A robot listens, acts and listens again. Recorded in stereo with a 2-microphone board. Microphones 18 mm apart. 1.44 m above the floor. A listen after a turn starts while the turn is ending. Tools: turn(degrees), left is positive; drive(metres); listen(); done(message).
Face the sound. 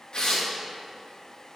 turn(degrees=55)
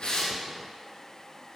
listen()
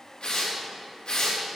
turn(degrees=70)
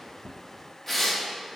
turn(degrees=10)
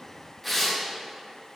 done("Facing the tearing paper.")